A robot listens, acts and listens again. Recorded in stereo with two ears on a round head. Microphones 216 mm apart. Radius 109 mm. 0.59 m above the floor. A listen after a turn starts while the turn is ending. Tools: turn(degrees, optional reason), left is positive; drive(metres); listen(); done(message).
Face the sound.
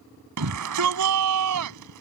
turn(degrees=-90)
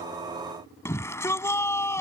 turn(degrees=10, reason="So it is at 10° left.")
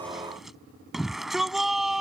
done("Found it: a shout, straight ahead.")